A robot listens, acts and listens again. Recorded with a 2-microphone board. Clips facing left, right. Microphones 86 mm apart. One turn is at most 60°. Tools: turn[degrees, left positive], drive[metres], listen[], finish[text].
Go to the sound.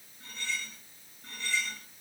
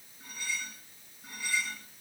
Action: turn[-30]
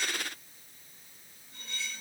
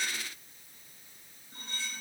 Thought: So it is at 140° right.
Action: turn[-60]
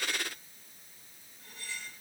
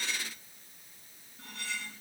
Thought: The cutlery clinking is now 100° right.
Action: turn[-60]
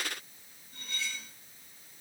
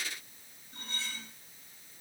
Thought: The cutlery clinking is now 35° right.
Action: turn[-35]
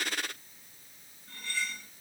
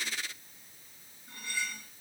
Thought: The cutlery clinking is now 15° right.
Action: turn[-15]
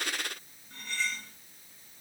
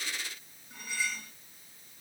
Action: drive[1.0]
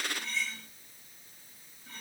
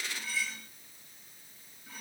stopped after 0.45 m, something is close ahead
Action: finish[Something is in my way. I am facing the cutlery clinking but have not reached it.]